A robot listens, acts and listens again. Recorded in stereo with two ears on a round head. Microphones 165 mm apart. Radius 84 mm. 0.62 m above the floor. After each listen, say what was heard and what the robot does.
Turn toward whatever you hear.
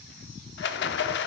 The rattle: about 65° left or 115° left. Turn 65° left.
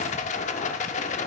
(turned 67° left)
So it is at 40° left. Turn 40° left.
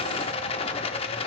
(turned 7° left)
The rattle is now 35° left. Turn 35° left.
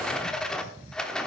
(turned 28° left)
Facing the rattle, under 1 m away.